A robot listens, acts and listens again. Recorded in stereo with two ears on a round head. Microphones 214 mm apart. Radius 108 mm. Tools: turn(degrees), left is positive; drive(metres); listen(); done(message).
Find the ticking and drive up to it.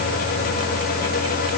listen()
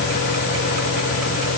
listen()
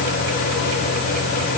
done("I can't make out ticking.")